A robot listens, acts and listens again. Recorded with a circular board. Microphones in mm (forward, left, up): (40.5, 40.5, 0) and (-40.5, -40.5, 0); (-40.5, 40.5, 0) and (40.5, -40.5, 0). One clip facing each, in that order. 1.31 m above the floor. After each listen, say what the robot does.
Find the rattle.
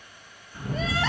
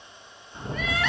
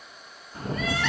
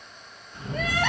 Turn 170° left.
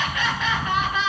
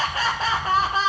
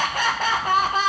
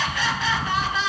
Found it: a rattle, straight ahead.